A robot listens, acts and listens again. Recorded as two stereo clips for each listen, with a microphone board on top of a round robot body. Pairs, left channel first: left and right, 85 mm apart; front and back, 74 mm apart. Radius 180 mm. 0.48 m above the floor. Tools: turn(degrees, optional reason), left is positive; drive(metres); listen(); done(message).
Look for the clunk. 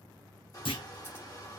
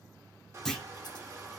turn(degrees=85, reason="The clunk: 85° left.")
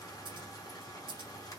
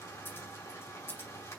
done("I heard a clunk from this way, but can't make it out now.")